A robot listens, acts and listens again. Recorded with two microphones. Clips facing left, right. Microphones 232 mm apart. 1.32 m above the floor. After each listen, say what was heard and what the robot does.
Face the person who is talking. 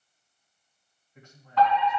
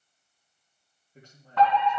The man speaking: about 35° right or 145° right. Turn 35° right.
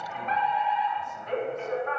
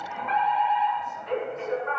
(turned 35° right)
Keep listening.
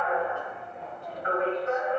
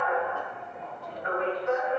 Keep listening.
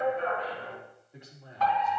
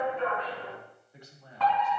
So it is at 25° left. Turn 25° left.
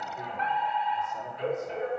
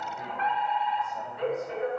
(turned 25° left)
Keep listening.
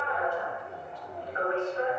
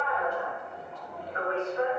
Keep listening.
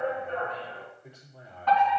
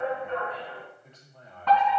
The man speaking is now 10° left. Turn 10° left.
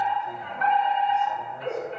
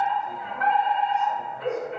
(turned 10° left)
Keep listening.
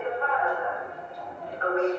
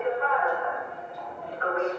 Keep listening.
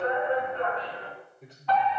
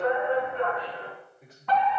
Facing the man speaking.